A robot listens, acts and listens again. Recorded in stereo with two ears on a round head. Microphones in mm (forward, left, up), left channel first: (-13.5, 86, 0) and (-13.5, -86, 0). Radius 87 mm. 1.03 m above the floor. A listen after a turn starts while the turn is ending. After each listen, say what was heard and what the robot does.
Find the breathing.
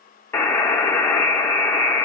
Keep listening.
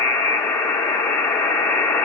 Keep listening.
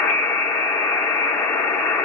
I can't make out breathing to turn to.